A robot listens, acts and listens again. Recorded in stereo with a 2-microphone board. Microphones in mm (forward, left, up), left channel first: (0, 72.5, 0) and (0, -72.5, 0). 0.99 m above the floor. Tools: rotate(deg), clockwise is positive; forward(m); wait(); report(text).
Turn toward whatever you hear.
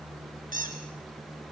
rotate(70)
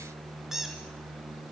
report("Found it: a squeak, straight ahead.")